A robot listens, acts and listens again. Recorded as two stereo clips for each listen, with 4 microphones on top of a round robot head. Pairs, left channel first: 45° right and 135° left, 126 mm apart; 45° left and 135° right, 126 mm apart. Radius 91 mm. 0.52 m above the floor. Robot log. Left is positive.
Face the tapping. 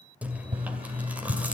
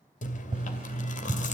note: The tapping: straight behind.
cmd yaw +180
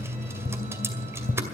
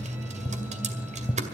note: The tapping is now 30° right.
cmd yaw -30
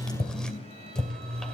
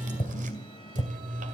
end: Facing the tapping, 1 to 2 m away.